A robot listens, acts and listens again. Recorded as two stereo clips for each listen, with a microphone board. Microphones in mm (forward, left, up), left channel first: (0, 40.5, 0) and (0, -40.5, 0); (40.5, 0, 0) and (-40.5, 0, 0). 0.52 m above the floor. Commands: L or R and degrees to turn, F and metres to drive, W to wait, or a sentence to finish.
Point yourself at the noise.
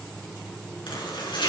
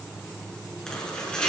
L80
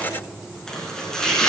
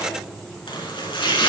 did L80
Found it: chopping, straight ahead.